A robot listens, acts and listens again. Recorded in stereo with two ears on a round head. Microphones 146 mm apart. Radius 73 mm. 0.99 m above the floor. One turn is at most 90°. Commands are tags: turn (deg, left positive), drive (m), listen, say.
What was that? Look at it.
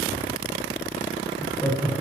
<turn deg="30"/>
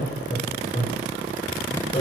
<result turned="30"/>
<turn deg="90"/>
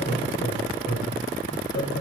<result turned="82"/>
<turn deg="75"/>
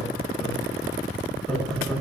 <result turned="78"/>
<say>Facing the laughter, over 4 m away.</say>